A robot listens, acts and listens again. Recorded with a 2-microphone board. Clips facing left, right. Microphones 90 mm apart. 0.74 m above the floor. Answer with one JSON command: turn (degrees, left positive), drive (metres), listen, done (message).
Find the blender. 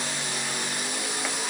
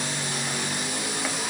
{"listen": true}
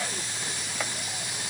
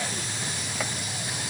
{"listen": true}
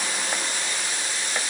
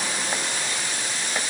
{"done": "I can't make out a blender to turn to."}